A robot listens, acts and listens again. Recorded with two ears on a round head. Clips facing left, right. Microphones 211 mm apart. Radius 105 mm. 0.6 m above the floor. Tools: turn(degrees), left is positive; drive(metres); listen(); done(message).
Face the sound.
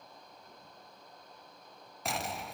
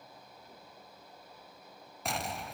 turn(degrees=30)
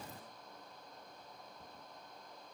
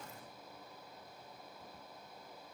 turn(degrees=150)
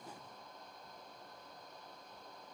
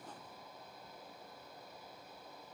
done("I heard an explosion from this way, but can't make it out now.")